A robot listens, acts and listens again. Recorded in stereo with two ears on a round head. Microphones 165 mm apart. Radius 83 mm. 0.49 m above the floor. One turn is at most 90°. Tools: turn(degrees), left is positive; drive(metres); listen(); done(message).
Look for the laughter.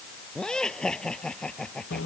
turn(degrees=30)
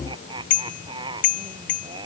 turn(degrees=-25)
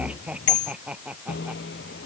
done("Facing the laughter.")